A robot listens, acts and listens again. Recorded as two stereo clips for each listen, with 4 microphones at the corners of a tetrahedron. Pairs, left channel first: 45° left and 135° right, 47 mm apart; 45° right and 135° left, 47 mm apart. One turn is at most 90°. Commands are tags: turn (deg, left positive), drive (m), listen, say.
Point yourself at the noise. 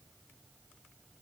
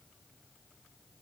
<listen/>
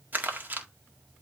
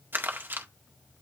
<turn deg="90"/>
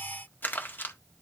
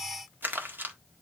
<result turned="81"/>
<turn deg="90"/>
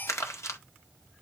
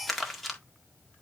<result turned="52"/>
<turn deg="40"/>
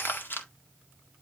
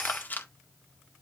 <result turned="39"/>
<say>Found it: crumpling, straight ahead, 1 to 2 m away.</say>